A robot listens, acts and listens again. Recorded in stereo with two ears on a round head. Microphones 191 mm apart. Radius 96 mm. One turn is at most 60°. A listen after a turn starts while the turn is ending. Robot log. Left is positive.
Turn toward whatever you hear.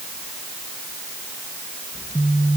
cmd yaw -30
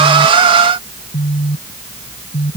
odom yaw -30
note: So it is at 20° left.
cmd yaw +20
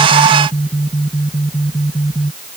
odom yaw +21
end: Found it: a phone buzzing, straight ahead.